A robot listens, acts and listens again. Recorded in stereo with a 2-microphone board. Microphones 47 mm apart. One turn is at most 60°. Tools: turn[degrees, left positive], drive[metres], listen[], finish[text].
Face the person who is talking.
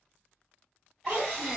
Thought: The child speaking: about 25° right or 155° right.
Action: turn[-25]
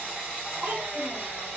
Thought: So it is at 125° right.
Action: turn[-60]
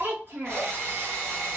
Thought: The child speaking is now 65° right.
Action: turn[-60]
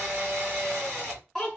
Action: finish[Facing the child speaking.]